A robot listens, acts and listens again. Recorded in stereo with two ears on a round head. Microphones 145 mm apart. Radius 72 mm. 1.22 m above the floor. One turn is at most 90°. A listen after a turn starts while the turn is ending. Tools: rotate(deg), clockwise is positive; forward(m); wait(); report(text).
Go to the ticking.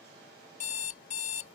wait()
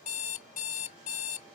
wait()
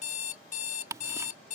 rotate(20)
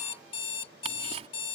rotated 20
rotate(90)
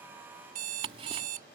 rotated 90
rotate(35)
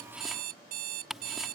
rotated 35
forward(1.0)
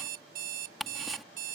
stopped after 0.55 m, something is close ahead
report("Blocked. The ticking is further on, straight ahead.")